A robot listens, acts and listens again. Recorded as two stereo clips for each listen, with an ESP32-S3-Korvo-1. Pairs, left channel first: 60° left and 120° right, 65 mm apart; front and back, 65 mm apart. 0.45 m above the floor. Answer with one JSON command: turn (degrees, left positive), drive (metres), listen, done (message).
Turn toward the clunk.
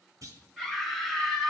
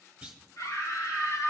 {"turn": -105}
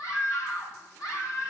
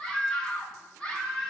{"done": "I heard a clunk from this way, but can't make it out now."}